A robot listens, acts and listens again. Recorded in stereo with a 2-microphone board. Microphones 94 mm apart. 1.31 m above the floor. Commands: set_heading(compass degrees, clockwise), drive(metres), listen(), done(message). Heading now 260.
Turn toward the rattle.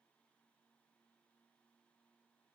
listen()
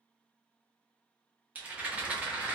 set_heading(275)
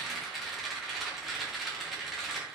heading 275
done("Facing the rattle, under 1 m away.")